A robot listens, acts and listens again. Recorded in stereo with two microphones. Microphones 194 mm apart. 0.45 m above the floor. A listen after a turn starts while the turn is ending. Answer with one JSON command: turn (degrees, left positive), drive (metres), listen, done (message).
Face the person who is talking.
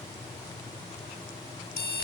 {"listen": true}
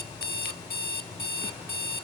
{"listen": true}
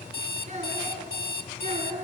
{"turn": -35}
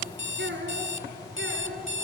{"turn": -115}
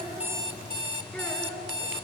{"done": "Found it: a child speaking, straight ahead, over 4 m away."}